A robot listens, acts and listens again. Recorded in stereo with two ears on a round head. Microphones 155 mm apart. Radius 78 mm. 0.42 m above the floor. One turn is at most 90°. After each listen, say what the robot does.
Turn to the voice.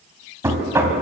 Keep listening.
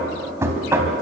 Keep listening.
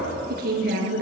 Turn 60° right.
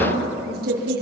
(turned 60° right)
Turn 60° right.
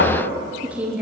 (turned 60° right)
Turn 10° right.
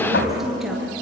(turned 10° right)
Facing the woman speaking.